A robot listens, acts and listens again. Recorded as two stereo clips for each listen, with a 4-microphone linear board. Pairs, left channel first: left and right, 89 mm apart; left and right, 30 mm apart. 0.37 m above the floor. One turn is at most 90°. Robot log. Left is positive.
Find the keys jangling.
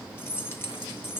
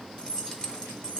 note: The keys jangling: about 30° left or 150° left.
cmd yaw +30
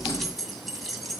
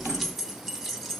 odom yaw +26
end: Found it: keys jangling, straight ahead, 1 to 2 m away.